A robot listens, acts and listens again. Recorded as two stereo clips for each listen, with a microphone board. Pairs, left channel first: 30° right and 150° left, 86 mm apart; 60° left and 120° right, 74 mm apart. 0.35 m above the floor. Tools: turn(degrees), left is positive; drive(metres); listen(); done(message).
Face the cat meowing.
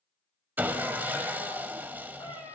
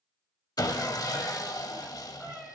turn(degrees=-30)
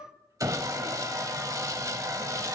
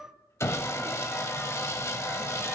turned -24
turn(degrees=-15)
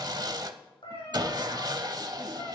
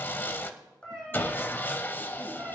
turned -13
turn(degrees=-25)
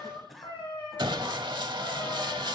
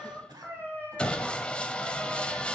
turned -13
turn(degrees=-10)
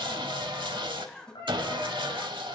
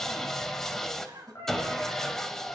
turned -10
done("Facing the cat meowing, 2 to 4 m away.")